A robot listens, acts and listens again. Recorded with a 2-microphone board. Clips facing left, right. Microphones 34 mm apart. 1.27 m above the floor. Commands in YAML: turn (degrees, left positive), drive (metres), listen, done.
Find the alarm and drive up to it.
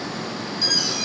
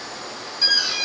turn: -20
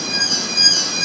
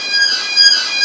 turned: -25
turn: -135
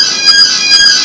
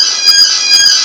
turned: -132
drive: 1.0
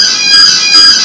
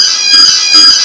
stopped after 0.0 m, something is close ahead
done: "Blocked. The alarm is further on, straight ahead."